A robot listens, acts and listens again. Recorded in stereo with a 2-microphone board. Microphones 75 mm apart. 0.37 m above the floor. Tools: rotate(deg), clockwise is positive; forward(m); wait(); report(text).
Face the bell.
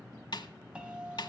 rotate(30)
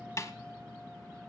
wait()
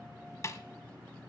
wait()
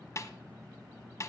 report("I heard a bell, but can't make it out now. It was about 15° left or 135° right.")